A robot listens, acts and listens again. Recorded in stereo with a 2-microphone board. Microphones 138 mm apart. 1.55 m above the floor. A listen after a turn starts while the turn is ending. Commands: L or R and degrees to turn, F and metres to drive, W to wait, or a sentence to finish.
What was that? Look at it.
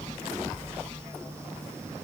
W
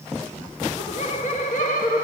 L70
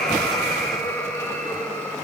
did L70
L15
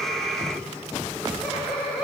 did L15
R10
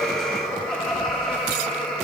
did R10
Found it: laughter, straight ahead, 2 to 4 m away.